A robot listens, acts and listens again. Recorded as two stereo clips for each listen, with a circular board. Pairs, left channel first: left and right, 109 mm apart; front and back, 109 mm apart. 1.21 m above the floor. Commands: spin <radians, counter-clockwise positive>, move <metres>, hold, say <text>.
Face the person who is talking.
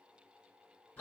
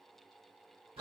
hold
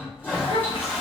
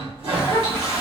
spin 1.13
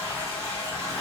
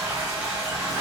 hold
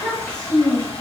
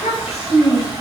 spin 0.17
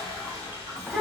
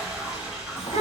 say Found it: a child speaking, straight ahead.